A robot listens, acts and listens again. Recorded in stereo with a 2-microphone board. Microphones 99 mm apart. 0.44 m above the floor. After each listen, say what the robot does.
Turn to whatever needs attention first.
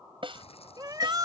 Turn 45° right.
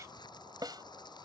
Keep listening.
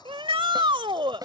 Turn 85° right.
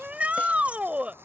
Turn 15° right.
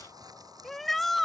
Found it: a shout, straight ahead.